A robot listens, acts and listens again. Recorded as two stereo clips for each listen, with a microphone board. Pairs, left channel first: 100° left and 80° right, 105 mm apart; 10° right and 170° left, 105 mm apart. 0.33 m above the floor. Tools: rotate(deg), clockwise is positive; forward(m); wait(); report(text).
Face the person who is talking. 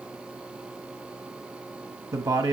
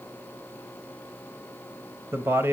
rotate(125)
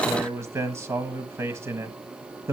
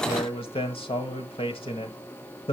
rotate(20)
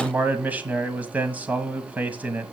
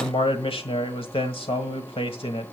report("Facing the man speaking.")